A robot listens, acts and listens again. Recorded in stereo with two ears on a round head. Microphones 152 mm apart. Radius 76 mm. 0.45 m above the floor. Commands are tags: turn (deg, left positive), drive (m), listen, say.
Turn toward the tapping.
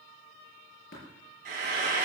<turn deg="60"/>
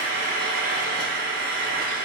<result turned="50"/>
<listen/>
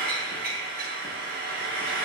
<listen/>
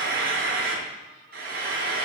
<say>I heard tapping, but can't make it out now. It was about 10° left or 70° left.</say>